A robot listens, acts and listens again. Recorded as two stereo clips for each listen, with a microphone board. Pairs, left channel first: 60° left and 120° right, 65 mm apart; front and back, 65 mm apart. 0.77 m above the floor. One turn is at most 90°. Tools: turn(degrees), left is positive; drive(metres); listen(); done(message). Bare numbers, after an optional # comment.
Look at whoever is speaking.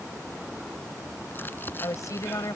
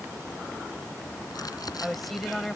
# The woman speaking: 85° left.
turn(85)
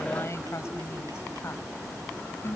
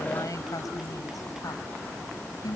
# The woman speaking is now 10° left.
turn(10)
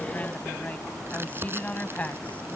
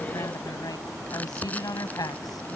done("Facing the woman speaking.")